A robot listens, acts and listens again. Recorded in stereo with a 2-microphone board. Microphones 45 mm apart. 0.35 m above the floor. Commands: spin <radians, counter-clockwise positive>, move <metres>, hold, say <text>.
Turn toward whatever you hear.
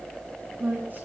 spin -0.87
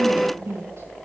spin -1.40
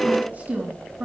spin -0.70
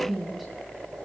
say Facing the woman speaking.